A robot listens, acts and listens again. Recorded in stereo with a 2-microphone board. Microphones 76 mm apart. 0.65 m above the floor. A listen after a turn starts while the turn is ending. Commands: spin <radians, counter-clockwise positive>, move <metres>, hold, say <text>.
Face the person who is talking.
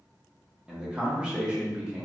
spin -0.52
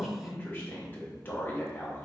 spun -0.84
spin 0.61
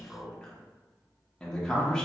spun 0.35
spin 0.26
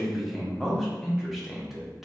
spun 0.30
say Found it: a man speaking, straight ahead.